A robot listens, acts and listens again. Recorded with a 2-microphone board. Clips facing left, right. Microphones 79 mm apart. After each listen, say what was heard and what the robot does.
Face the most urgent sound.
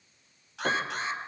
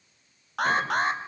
The alarm: about 60° right or 120° right. Turn 60° right.
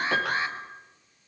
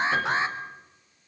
So it is at 30° right. Turn 30° right.
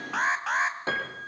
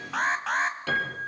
Found it: an alarm, straight ahead.